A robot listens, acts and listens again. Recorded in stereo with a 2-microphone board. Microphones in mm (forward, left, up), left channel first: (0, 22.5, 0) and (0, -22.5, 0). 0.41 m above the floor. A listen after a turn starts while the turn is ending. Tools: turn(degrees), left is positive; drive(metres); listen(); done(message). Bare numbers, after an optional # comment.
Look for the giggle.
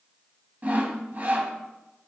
listen()
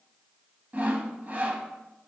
listen()
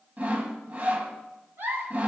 # The giggle: about 55° right or 125° right.
turn(-55)
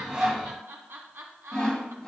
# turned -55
# So it is at 70° right.
turn(-70)
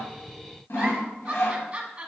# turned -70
# The giggle is now 25° right.
turn(-25)
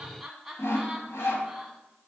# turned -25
done("Found it: a giggle, straight ahead.")